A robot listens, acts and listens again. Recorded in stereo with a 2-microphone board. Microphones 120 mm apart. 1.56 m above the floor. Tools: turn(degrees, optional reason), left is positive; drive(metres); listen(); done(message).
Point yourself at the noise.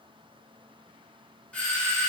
turn(degrees=30)
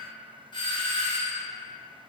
turn(degrees=140, reason="So it is at 140° left.")
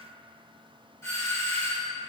turn(degrees=20, reason="The doorbell is now 20° left.")
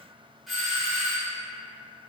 done("Found it: a doorbell, straight ahead, under 1 m away.")